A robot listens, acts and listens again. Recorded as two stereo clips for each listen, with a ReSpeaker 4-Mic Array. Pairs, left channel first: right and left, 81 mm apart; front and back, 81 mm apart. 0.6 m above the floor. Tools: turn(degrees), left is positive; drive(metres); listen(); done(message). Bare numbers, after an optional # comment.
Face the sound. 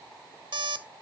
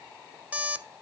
# The alarm clock: 105° left.
turn(105)
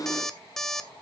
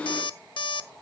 done("Facing the alarm clock.")